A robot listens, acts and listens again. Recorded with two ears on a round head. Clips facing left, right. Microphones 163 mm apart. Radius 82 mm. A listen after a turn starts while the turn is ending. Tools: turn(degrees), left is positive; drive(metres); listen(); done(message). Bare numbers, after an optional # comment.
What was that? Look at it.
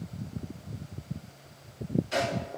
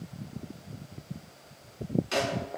turn(-90)
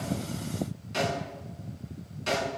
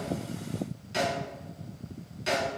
# So it is at 10° right.
turn(-10)
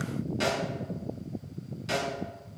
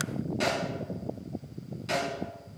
done("Found it: a snare drum, straight ahead, over 4 m away.")